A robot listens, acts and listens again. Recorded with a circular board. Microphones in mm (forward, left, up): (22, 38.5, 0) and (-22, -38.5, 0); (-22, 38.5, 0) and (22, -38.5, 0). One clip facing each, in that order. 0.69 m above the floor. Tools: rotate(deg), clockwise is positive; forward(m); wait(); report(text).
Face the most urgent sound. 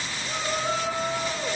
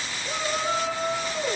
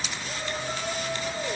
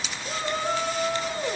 rotate(30)
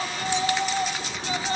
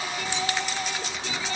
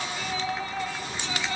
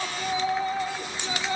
rotate(-10)
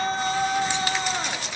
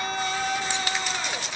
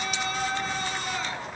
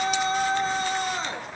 report("Found it: a shout, straight ahead, over 4 m away.")